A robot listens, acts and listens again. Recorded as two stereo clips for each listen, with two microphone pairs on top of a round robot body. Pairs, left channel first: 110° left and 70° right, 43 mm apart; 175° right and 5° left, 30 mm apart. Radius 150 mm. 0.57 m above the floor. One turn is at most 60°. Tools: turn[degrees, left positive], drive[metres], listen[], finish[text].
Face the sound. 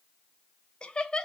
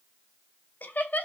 Thought: The laughter: 175° right.
Action: turn[-60]
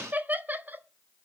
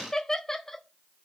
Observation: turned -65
Thought: The laughter is now 95° right.
Action: turn[-60]
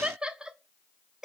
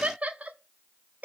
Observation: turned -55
Action: finish[Facing the laughter, 1 to 2 m away.]